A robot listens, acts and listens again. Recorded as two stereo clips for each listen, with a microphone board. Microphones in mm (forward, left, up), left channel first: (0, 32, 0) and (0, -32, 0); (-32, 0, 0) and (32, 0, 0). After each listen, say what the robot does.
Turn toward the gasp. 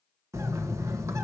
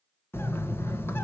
Keep listening.
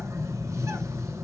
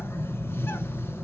Keep listening.
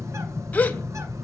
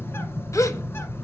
Turn 155° left.
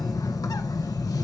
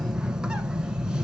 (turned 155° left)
Facing where the gasp came from. I can't hear it now.